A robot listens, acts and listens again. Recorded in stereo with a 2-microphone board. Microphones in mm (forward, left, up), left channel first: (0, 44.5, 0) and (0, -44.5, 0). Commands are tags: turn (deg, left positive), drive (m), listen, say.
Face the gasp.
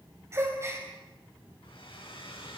<turn deg="-30"/>
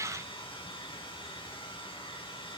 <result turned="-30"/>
<listen/>
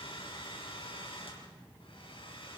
<say>I heard a gasp, but can't make it out now. It was about straight ahead or 120° right.</say>